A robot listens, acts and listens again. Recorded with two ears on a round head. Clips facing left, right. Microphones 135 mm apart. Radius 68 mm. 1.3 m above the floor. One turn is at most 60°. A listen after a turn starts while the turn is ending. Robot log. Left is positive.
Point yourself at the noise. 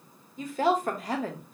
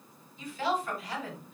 note: The woman speaking: about 40° left or 140° left.
cmd yaw +40
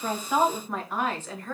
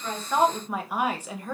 note: So it is at 15° right.
cmd yaw -15
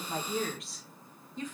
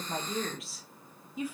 note: The woman speaking is now 10° right.
cmd yaw -10
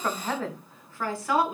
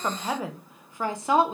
note: The woman speaking is now 25° right.
cmd yaw -25
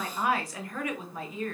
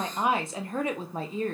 note: The woman speaking is now 25° right.
cmd yaw -25
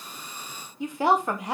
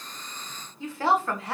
note: The woman speaking is now 15° left.
cmd yaw +15
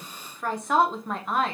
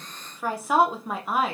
end: Found it: a woman speaking, straight ahead, 1 to 2 m away.